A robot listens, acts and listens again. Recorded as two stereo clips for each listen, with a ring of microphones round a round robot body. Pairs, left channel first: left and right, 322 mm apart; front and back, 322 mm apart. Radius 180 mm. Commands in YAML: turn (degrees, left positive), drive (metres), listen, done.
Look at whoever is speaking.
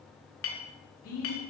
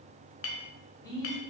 turn: 75
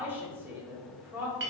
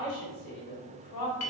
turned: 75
done: "Found it: a man speaking, straight ahead."